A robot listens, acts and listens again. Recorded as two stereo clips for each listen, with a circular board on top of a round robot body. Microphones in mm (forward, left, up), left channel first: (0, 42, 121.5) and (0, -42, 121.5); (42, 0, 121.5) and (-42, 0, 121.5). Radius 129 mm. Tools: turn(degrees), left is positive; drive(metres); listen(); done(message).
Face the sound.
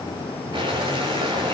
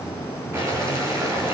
turn(degrees=-120)
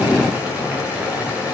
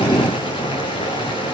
turn(degrees=-15)
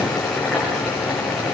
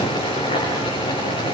done("Facing the boiling.")